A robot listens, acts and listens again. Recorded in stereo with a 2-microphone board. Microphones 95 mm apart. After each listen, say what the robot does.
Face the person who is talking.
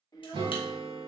Turn 40° left.
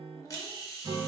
Keep listening.
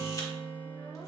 Keep listening.
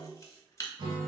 I heard a child speaking, but can't make it out now. It was about straight ahead or 100° left.